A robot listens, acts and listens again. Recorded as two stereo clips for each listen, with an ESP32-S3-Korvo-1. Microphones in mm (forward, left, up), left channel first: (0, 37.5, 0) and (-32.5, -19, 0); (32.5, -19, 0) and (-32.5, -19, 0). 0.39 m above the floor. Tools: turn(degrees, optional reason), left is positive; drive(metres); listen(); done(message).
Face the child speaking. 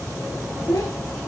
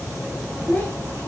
turn(degrees=60, reason="The child speaking: 60° left.")
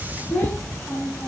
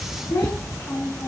done("Found it: a child speaking, straight ahead, 2 to 4 m away.")